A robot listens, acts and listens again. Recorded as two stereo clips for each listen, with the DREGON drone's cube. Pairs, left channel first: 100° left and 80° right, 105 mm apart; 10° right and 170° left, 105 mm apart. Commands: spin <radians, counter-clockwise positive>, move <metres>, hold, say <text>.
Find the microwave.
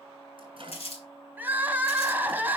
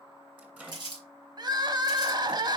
spin -2.01
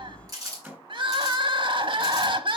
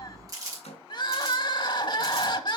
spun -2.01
spin -0.17
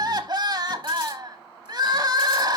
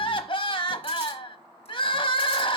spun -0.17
hold
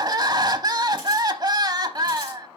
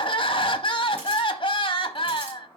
hold
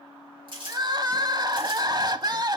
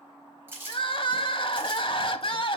say Facing where the microwave came from. I can't hear it now.